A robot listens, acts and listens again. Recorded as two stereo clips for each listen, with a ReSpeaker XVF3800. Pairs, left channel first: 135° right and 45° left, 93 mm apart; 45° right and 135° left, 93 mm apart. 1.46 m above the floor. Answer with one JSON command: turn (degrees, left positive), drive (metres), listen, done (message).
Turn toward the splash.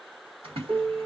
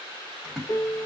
{"turn": 45}
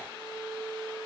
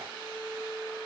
{"done": "I heard a splash from this way, but can't make it out now."}